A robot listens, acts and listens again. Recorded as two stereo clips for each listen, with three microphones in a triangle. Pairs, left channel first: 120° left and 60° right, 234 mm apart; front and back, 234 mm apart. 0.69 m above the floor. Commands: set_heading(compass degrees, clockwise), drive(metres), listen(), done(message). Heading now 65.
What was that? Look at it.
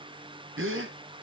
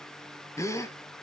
set_heading(140)
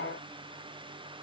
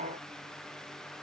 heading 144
done("Facing where the gasp came from. I can't hear it now.")